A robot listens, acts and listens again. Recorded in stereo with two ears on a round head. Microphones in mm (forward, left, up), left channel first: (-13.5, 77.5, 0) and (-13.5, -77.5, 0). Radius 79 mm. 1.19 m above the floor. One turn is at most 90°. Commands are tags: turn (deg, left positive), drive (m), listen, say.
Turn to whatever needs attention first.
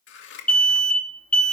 <turn deg="30"/>
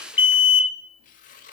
<turn deg="90"/>
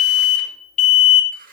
<turn deg="50"/>
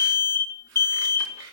<turn deg="15"/>
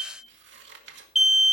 <say>Facing the alarm.</say>